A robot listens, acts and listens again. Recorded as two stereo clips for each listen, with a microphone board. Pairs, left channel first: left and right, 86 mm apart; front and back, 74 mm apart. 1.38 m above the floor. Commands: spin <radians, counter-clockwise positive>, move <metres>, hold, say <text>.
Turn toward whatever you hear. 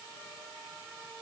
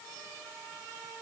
hold
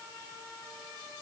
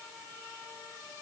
hold
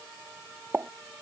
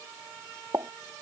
spin -2.71
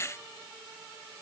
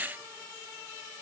say Facing where the pop came from. I can't hear it now.